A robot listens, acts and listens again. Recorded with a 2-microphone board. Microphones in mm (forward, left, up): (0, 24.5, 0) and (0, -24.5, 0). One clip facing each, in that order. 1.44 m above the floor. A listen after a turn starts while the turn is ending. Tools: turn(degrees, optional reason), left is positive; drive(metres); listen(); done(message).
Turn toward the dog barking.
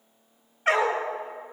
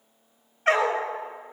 turn(degrees=30)
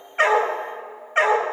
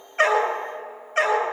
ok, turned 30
turn(degrees=140, reason="So it is at 140° left.")
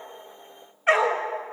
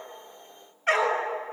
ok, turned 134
done("Found it: a dog barking, straight ahead.")